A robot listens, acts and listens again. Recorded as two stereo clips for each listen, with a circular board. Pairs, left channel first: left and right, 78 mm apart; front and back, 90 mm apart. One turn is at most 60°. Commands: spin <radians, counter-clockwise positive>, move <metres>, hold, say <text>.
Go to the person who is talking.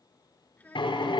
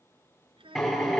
spin 1.05
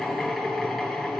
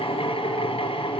spin 1.05
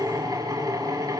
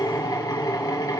spin 0.70
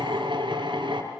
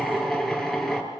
say I heard a child speaking from this way, but can't make it out now. I did not reach it.